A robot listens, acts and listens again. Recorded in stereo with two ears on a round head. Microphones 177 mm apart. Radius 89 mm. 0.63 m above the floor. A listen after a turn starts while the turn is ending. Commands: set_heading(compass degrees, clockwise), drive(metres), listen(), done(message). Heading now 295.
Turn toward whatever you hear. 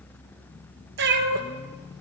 set_heading(355)
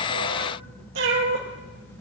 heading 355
set_heading(55)
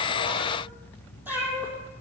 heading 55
set_heading(65)
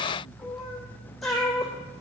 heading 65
done("Facing the cat meowing.")